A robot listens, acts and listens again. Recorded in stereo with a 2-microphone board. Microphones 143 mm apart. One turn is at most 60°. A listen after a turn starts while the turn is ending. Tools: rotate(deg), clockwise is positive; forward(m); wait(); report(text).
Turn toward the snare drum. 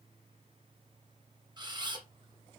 wait()
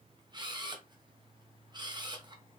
wait()
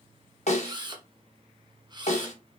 rotate(-50)
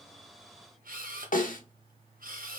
rotate(-60)
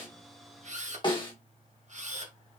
rotate(-35)
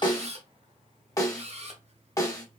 rotate(-25)
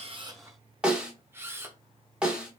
report("Facing the snare drum, 1 to 2 m away.")